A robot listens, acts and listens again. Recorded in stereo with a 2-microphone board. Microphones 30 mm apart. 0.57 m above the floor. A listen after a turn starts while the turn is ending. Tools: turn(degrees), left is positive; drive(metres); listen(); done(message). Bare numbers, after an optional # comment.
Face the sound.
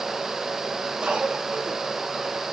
# The cough: about 25° right or 155° right.
turn(-25)
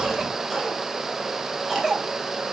done("Facing the cough.")